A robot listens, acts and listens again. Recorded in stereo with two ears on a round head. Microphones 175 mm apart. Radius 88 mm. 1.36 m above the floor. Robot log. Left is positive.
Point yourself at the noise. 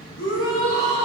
note: The shout: about 70° left or 110° left.
cmd yaw +70
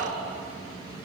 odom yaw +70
cmd idle
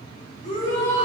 note: So it is at 45° left.
cmd yaw +45
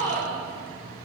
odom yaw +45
note: The shout is now 10° left.
cmd yaw +10
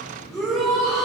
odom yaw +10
end: Facing the shout.